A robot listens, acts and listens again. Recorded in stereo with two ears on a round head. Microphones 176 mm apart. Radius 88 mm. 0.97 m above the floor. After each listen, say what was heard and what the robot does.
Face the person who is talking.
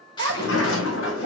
The child speaking: about 60° right or 120° right. Turn 60° right.
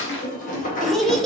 Found it: a child speaking, straight ahead, under 1 m away.